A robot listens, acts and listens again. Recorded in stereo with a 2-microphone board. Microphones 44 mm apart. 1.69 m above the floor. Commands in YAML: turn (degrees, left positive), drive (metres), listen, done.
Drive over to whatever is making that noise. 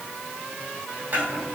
turn: -55
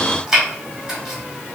turn: -20
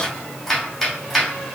drive: 1.0
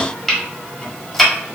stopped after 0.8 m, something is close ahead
turn: 10
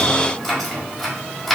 done: "I am next to the chopping."